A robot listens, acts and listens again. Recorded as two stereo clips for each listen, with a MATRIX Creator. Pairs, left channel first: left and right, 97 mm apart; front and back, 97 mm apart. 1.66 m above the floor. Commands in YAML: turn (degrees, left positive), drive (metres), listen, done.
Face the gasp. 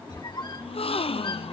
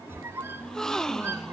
turn: 85
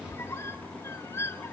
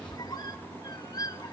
done: "I heard a gasp from this way, but can't make it out now."